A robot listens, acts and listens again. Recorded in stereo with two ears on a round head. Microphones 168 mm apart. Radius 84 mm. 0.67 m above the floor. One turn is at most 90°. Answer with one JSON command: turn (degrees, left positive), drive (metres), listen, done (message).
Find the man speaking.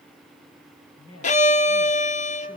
{"turn": 90}
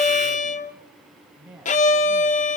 {"done": "Facing the man speaking, over 4 m away."}